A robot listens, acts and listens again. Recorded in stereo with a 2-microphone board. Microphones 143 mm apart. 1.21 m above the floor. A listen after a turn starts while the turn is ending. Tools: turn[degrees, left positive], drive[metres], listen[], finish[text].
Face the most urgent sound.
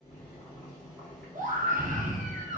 Thought: The scream: about 65° right or 115° right.
Action: turn[-65]
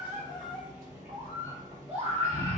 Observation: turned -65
Thought: So it is at 50° right.
Action: turn[-50]
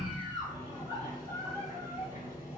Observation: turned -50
Thought: The scream is now 25° right.
Action: turn[-25]
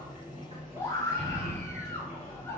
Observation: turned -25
Thought: The scream is now 15° left.
Action: turn[15]
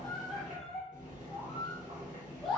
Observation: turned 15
Action: finish[Facing the scream, under 1 m away.]